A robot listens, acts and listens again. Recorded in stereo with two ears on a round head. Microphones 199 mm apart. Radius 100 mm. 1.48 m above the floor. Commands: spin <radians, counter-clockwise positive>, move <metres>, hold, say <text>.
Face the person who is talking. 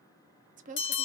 spin -0.61
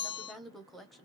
say Found it: a woman speaking, straight ahead.